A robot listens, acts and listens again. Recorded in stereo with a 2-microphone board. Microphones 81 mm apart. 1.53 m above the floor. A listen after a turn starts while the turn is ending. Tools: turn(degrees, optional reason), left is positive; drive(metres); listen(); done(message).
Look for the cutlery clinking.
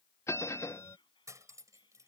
turn(degrees=-40, reason="The cutlery clinking: about 40° right or 140° right.")
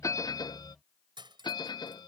turn(degrees=-105, reason="So it is at 105° right.")
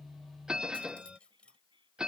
turn(degrees=15, reason="The cutlery clinking is now 15° left.")
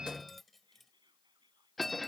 done("Found it: cutlery clinking, straight ahead.")